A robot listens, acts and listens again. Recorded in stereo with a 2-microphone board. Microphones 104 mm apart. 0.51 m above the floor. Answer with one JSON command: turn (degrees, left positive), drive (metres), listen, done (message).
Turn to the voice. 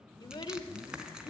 {"turn": 50}
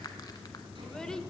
{"done": "Facing the child speaking."}